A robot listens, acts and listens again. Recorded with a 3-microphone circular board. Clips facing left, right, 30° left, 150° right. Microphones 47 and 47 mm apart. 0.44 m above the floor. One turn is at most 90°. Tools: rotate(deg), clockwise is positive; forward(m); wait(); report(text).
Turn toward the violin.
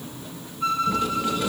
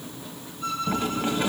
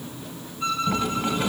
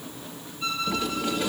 rotate(-70)
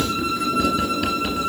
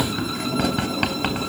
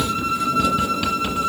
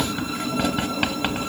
wait()
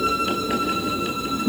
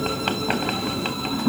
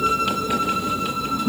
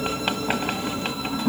wait()
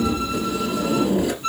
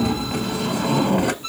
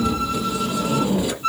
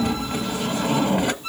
report("Found it: a violin, straight ahead.")